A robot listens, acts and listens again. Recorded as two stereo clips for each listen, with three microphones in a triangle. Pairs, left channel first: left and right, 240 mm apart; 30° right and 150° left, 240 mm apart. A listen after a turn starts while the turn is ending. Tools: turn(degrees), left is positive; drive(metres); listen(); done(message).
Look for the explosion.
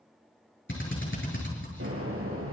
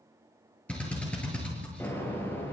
turn(degrees=-110)
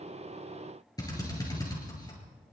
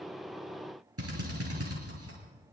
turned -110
done("I heard an explosion from this way, but can't make it out now.")